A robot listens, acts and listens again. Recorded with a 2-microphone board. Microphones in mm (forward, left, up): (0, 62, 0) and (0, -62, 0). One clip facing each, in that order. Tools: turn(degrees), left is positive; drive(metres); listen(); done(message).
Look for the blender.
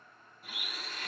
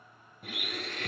turn(degrees=-65)
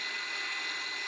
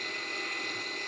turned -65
turn(degrees=-50)
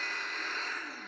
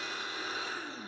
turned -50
turn(degrees=-15)
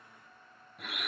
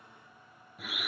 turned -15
done("Found it: a blender, straight ahead.")